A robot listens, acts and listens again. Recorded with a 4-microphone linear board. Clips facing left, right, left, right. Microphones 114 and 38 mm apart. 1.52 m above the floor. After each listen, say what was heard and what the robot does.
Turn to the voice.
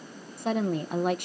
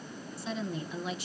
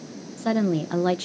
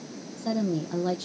The woman speaking: about 55° left or 125° left. Turn 55° left.
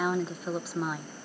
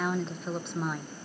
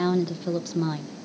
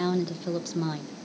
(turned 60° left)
Facing the woman speaking.